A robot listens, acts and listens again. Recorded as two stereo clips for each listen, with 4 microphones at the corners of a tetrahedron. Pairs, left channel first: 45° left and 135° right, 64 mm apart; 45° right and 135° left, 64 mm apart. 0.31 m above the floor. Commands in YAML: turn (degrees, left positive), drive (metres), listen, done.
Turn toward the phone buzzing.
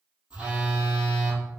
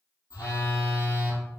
turn: -65
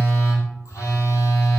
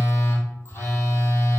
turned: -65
turn: 10
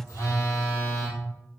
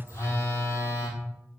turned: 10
done: "Found it: a phone buzzing, straight ahead, 1 to 2 m away."